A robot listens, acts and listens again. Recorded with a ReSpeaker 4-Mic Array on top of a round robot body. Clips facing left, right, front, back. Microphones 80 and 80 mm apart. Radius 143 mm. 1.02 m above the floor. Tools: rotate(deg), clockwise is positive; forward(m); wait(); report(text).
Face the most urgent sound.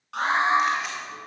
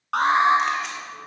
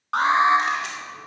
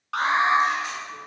rotate(60)
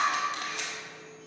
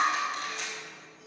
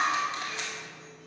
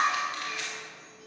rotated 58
wait()
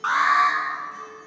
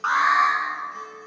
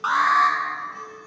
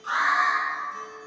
report("Facing the alarm.")